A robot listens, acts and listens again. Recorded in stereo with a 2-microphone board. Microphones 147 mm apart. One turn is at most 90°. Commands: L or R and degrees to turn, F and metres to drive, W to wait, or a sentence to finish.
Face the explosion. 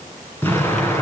L30
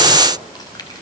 W
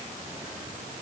I heard an explosion, but can't make it out now. It was about 15° right or 135° left.